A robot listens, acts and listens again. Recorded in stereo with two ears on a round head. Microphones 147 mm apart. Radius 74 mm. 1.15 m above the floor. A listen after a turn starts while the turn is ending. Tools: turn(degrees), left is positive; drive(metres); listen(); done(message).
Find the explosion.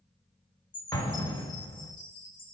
turn(degrees=20)
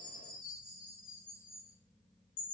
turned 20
listen()
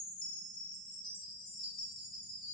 done("I heard an explosion, but can't make it out now. It was about straight ahead or 140° left.")